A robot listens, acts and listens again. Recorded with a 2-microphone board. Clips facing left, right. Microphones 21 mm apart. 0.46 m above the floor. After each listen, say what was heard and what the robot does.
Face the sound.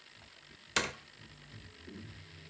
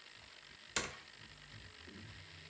The door slam: about 30° left or 150° left. Turn 30° left.
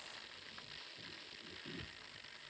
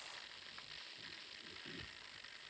Keep listening.
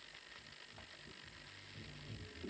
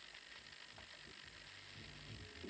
I heard a door slam, but can't make it out now. It was about straight ahead or 120° left.